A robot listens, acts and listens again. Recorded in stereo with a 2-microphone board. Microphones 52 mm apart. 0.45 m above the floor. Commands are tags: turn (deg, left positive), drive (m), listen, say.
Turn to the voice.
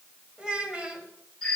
<turn deg="-20"/>
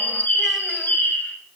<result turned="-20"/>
<listen/>
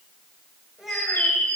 <say>Facing the child speaking, 1 to 2 m away.</say>